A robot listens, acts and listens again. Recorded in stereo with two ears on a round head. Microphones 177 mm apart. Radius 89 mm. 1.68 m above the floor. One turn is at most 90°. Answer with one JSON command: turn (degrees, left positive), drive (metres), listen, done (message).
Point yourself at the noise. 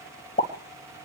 {"turn": 35}
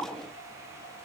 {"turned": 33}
{"listen": true}
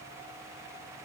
{"done": "I heard a pop, but can't make it out now. It was about 5° left or 110° left."}